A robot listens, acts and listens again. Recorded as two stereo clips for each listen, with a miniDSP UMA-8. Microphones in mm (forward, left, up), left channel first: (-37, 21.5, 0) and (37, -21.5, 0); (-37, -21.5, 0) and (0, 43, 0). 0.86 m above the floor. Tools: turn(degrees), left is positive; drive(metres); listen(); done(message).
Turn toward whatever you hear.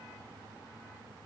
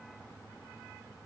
listen()
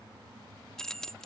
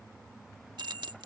turn(degrees=65)
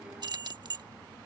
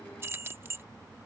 done("Facing the keys jangling.")